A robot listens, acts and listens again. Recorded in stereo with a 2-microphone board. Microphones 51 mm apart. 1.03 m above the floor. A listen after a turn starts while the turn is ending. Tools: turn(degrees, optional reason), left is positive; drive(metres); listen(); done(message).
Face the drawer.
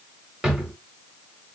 turn(degrees=-30)
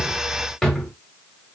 turn(degrees=10, reason="So it is at 10° left.")
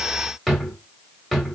done("Found it: a drawer, straight ahead, 1 to 2 m away.")